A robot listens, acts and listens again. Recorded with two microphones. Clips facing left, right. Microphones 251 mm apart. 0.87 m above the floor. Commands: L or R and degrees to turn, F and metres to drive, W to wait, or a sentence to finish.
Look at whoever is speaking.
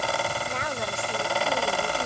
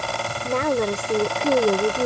R65
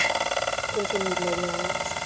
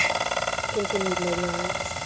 Facing the woman speaking.